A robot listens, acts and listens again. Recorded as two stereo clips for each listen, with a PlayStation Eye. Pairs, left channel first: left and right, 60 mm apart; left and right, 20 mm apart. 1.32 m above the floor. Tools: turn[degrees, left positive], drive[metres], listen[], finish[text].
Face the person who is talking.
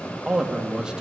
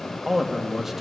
Action: turn[-30]
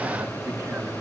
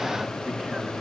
Action: listen[]
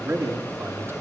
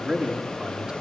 Thought: So it is at 135° right.
Action: turn[-135]
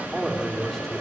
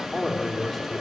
Action: finish[Found it: a man speaking, straight ahead.]